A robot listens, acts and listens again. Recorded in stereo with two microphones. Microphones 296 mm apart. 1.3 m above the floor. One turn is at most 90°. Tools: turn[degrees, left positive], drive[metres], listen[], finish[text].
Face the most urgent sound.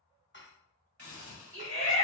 Thought: The shout: about 45° right or 135° right.
Action: turn[-45]
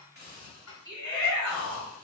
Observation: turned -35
Thought: So it is at 100° right.
Action: turn[-90]
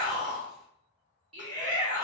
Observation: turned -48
Thought: The shout is now 55° right.
Action: turn[-55]
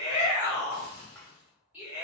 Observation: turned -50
Action: finish[Facing the shout.]